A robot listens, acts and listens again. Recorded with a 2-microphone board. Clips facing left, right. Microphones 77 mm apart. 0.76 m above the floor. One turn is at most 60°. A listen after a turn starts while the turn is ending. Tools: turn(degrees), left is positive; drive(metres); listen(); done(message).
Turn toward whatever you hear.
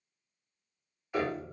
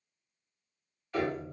turn(degrees=30)
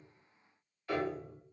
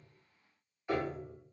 turn(degrees=-15)
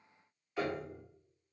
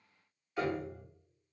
done("Found it: a piano, straight ahead.")